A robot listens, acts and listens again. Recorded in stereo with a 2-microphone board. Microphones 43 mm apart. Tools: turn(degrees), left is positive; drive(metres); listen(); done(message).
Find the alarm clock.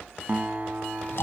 listen()
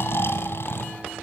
listen()
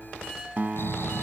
done("I can't make out an alarm clock, only snoring and a guitar.")